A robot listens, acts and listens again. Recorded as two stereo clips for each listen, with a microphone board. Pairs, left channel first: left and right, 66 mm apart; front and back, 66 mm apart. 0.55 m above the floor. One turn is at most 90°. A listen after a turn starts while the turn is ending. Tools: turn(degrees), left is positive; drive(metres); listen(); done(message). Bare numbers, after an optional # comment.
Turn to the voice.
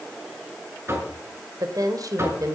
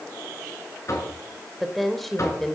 # The woman speaking: 85° right.
turn(-85)
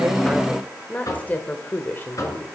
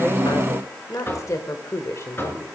# The woman speaking is now 35° left.
turn(35)
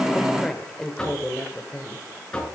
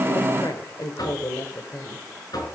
# The woman speaking is now 20° left.
turn(20)
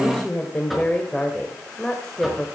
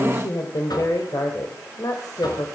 # The woman speaking is now 10° left.
turn(10)
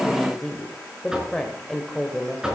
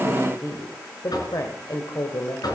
done("Found it: a woman speaking, straight ahead, 2 to 4 m away.")